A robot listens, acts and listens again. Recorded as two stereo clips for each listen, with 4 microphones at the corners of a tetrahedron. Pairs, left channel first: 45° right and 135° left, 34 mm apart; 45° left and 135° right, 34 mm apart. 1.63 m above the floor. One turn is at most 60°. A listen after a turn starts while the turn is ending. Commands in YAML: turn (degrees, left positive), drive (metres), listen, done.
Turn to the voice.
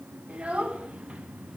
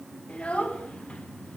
turn: 60
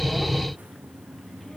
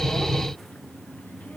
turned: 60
turn: 30
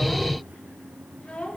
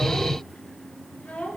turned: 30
done: "Found it: a child speaking, straight ahead."